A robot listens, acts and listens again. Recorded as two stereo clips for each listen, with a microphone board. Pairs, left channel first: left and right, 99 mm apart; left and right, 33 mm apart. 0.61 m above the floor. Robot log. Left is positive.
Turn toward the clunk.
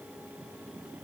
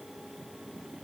cmd idle
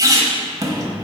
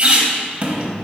cmd idle
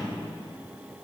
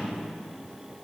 end: I can't make out a clunk, only a squeak.